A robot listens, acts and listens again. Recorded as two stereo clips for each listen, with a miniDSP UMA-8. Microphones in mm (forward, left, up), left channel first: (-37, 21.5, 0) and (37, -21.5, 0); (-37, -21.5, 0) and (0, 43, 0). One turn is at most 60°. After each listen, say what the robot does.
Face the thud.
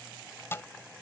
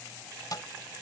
Turn 60° right.
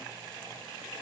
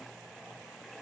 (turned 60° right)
Turn 60° right.
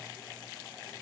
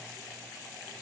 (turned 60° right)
Turn 30° right.
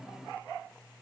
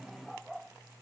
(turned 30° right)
Facing where the thud came from. I can't hear it now.